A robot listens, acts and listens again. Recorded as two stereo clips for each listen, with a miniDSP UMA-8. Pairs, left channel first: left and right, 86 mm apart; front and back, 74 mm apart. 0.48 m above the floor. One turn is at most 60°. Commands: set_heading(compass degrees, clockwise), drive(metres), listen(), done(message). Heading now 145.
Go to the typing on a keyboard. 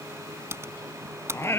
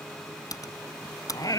set_heading(180)
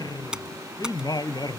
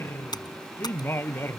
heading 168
set_heading(178)
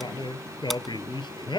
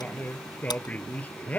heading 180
listen()
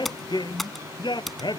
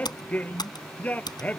drive(1.0)
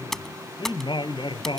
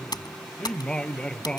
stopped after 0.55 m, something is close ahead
done("Blocked. The typing on a keyboard is further on, straight ahead.")